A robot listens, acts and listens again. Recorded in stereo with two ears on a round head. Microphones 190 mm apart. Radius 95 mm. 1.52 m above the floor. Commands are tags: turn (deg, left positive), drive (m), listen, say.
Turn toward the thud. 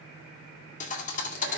<turn deg="35"/>
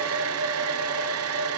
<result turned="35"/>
<listen/>
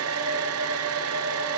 <say>I heard a thud, but can't make it out now. It was about straight ahead or 110° left.</say>